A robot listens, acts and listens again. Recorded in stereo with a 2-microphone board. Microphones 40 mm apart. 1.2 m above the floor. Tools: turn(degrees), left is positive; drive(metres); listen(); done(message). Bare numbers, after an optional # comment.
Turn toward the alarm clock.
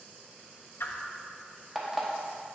turn(-30)
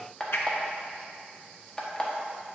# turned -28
# So it is at 25° left.
turn(25)
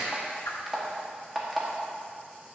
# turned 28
done("Found it: an alarm clock, straight ahead, 1 to 2 m away.")